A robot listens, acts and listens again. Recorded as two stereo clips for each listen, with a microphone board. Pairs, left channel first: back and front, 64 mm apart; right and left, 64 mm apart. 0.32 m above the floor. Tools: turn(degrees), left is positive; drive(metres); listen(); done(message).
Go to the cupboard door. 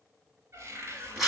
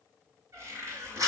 turn(degrees=50)
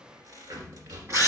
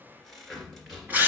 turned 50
drive(metres=1.0)
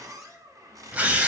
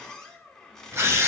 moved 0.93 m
turn(degrees=-10)
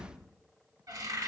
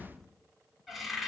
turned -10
drive(metres=1.0)
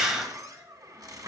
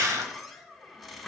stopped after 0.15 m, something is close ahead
done("I am next to the cupboard door.")